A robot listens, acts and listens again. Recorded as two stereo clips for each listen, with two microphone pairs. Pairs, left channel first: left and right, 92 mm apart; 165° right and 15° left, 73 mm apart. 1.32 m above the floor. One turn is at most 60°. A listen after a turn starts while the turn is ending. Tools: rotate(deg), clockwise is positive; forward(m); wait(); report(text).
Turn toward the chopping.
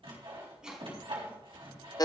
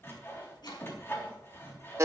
rotate(60)
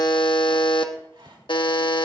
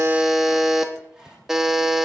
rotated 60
rotate(60)
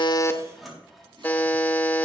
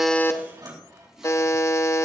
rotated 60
rotate(55)
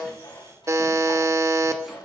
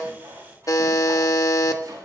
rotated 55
report("I heard chopping from this way, but can't make it out now.")